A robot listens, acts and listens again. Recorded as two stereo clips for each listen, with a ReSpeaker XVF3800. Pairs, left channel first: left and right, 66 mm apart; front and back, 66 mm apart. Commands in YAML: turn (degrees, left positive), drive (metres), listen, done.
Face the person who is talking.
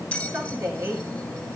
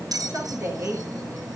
turn: -125
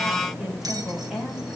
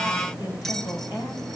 turn: -10
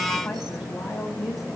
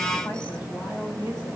done: "Facing the woman speaking, over 4 m away."